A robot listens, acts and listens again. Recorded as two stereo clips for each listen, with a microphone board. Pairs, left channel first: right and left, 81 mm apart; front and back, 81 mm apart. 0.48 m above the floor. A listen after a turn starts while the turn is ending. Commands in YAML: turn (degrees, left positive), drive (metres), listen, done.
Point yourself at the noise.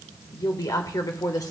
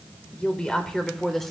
turn: -85
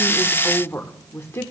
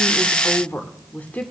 turn: -65
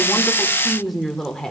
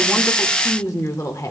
turn: -10
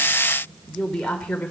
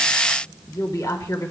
turn: -20
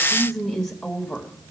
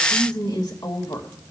done: "Facing the woman speaking, 1 to 2 m away."